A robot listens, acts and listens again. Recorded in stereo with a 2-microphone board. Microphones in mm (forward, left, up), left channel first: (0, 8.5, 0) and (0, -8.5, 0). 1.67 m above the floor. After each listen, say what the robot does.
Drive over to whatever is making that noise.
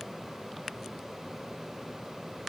Keep listening.
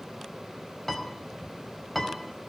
Turn 30° left.
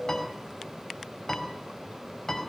Turn 140° left.
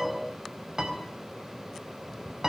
Turn 40° right.
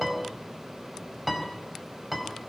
Drive 1.0 m forward.
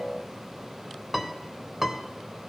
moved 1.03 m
Turn 15° right.
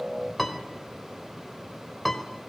Drive 1.0 m forward.
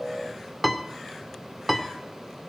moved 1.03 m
Drive 1.0 m forward.
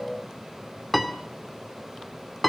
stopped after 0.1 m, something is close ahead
Arrived at the piano, straight ahead.